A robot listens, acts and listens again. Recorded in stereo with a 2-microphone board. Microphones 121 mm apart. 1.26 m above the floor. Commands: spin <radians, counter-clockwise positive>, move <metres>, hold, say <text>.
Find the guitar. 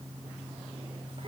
hold
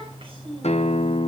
spin 1.13
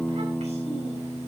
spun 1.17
say Found it: a guitar, straight ahead, under 1 m away.